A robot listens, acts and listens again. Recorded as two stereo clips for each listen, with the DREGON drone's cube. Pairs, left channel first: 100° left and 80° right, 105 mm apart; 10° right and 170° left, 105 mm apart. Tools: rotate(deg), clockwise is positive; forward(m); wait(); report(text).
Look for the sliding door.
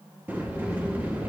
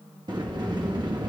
rotate(150)
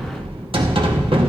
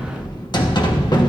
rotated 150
rotate(55)
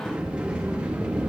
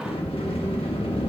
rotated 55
report("Found it: a sliding door, straight ahead.")